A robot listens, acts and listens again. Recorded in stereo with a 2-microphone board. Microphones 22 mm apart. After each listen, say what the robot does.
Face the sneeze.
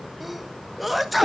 Turn 30° right.
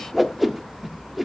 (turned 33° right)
Keep listening.
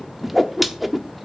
I heard a sneeze, but can't make it out now. It was about 25° left or 140° right.